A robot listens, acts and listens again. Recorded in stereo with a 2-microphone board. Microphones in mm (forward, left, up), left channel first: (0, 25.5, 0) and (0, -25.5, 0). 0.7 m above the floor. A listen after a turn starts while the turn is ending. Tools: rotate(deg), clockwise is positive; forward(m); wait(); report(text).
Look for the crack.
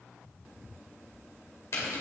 wait()
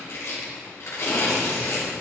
wait()
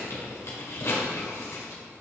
report("I can't make out a crack to turn to.")